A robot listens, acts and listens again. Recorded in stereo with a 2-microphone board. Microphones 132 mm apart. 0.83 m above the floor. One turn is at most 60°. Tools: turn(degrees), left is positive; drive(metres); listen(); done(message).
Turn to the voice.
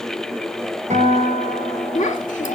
turn(degrees=60)
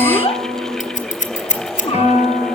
turn(degrees=45)
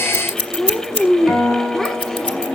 done("Facing the child speaking, 1 to 2 m away.")